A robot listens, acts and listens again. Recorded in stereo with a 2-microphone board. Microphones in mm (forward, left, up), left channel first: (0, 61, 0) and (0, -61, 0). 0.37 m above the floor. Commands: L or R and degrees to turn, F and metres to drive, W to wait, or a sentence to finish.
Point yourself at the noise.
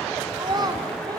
R35
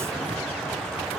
W
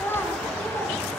L20
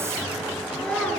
L10
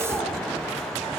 W
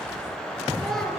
Found it: a child speaking, straight ahead, over 4 m away.